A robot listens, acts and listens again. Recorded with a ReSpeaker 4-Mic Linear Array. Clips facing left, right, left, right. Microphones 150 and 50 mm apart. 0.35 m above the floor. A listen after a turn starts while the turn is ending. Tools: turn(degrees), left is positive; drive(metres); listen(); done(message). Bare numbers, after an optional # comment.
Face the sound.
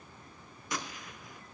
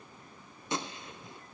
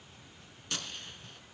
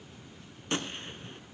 # The gunshot: about 30° right or 150° right.
turn(-30)
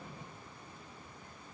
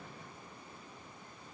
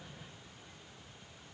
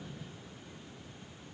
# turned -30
listen()
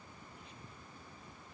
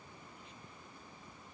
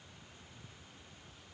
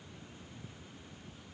done("I heard a gunshot, but can't make it out now. It was about straight ahead or 120° right.")